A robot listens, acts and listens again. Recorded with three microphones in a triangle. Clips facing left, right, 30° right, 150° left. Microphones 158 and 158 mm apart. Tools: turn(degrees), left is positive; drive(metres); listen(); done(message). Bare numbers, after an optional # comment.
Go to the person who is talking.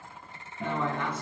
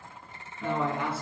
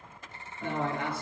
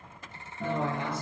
# The man speaking: 10° right.
turn(-10)
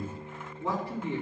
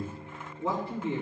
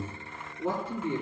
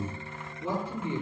drive(1.0)
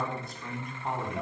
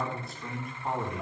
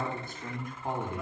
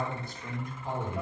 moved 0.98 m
drive(1.0)
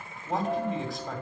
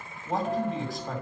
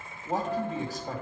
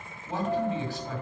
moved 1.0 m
drive(1.0)
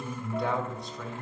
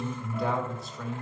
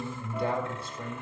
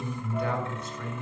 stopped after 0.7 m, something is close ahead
done("Arrived at the man speaking, straight ahead.")